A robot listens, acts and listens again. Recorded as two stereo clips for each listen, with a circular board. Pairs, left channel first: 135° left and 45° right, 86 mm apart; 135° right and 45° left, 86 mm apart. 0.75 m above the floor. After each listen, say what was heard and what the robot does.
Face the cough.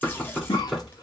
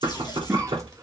The cough: 100° left. Turn 100° left.
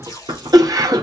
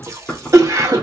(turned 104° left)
Found it: a cough, straight ahead, 1 to 2 m away.